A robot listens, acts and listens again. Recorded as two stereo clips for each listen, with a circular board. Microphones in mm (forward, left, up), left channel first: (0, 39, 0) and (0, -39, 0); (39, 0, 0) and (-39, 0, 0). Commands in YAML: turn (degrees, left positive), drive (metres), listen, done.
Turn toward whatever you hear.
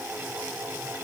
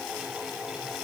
listen: true
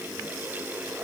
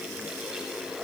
listen: true
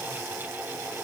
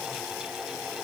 done: "I can't make out anything to turn to."